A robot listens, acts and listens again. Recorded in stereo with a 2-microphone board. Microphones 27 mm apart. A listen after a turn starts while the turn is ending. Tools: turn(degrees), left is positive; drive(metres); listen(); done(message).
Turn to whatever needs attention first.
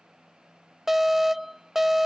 turn(degrees=-30)
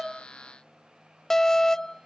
turn(degrees=20)
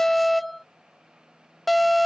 done("Found it: an alarm, straight ahead.")